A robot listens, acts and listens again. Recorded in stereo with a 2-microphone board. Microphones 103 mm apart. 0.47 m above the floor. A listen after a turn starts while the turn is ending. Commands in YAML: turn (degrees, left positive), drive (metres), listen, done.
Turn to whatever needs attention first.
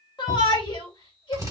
turn: 45
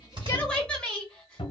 turn: 10
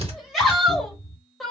done: "Facing the shout."